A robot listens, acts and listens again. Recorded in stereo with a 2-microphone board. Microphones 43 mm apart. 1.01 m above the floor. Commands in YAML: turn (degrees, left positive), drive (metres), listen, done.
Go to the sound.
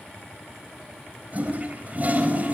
turn: -40
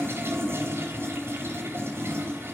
turn: -100
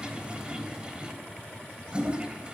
turn: -20
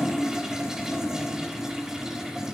turn: -10
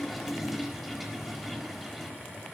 drive: 1.0
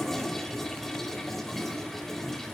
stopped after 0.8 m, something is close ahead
turn: 10
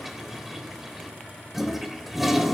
done: "Blocked. The toilet flushing is further on, straight ahead."